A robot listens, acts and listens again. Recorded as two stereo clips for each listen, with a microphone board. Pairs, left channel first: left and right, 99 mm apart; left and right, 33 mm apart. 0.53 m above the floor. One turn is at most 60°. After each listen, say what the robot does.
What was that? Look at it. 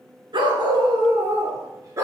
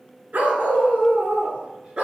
Turn 30° right.
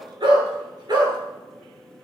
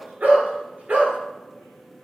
Turn 40° right.
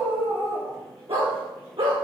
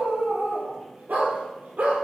Turn 60° right.
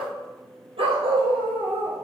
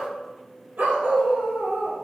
Turn 60° right.
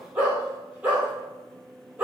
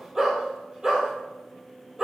Turn 10° right.
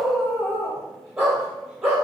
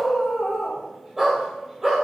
Found it: a dog barking, straight ahead.